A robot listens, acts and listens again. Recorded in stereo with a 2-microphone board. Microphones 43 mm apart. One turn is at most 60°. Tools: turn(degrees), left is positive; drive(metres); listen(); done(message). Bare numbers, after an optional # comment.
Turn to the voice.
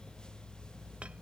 listen()
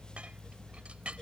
listen()
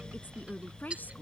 # The woman speaking: about 45° left or 135° left.
turn(45)
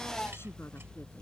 listen()
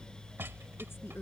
# So it is at 100° left.
turn(60)
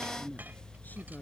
# The woman speaking is now 45° left.
turn(45)
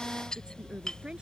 # The woman speaking is now 20° right.
turn(-20)
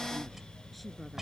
listen()
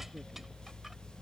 listen()
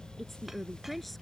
done("Found it: a woman speaking, straight ahead.")